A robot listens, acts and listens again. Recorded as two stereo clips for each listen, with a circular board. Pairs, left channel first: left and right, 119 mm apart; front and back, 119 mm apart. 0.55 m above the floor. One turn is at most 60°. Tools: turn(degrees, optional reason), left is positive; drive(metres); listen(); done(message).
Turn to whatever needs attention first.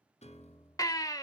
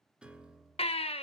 turn(degrees=30, reason="The baby crying: 30° left.")
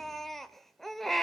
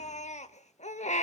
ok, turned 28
done("Found it: a baby crying, straight ahead.")